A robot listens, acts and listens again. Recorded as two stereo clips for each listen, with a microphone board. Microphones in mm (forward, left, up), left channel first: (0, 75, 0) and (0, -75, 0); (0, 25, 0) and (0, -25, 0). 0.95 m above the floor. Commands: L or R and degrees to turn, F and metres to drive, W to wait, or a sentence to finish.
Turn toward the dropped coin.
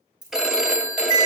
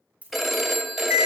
R30
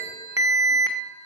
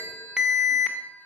W
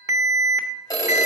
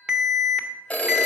I heard a dropped coin, but can't make it out now. It was about straight ahead or 120° right.